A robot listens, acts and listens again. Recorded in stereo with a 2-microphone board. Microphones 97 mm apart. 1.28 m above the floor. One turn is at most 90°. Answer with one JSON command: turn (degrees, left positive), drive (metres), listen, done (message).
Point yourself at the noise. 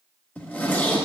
{"turn": 20}
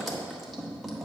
{"done": "Found it: a zipper, straight ahead, 1 to 2 m away."}